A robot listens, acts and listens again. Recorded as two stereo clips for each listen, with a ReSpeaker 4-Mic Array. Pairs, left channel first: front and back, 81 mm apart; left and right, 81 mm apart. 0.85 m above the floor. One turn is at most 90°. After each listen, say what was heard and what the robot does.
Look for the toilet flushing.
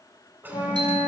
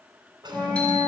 The toilet flushing: 115° right. Turn 90° right.
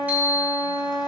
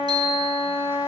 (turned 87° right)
Nothing new. It was at 25° right. Turn 25° right.
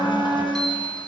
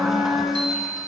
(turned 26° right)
Keep listening.
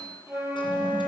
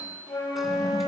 I heard a toilet flushing from this way, but can't make it out now.